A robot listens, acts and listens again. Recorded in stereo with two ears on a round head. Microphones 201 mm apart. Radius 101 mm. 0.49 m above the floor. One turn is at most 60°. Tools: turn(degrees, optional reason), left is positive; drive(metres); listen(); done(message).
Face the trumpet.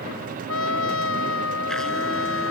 turn(degrees=60, reason="The trumpet: about 60° left or 120° left.")
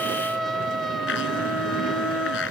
done("Found it: a trumpet, straight ahead.")